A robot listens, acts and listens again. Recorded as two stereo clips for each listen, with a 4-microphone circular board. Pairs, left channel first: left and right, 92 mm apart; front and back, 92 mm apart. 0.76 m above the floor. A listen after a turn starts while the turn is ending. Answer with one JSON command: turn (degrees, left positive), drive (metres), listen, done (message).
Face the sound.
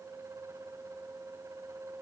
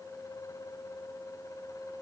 {"listen": true}
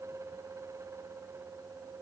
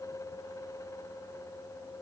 {"listen": true}
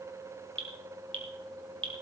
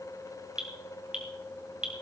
{"turn": -100}
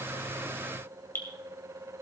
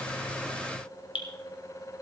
{"turn": 25}
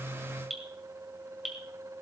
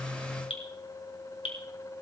{"done": "Facing the dripping, 2 to 4 m away."}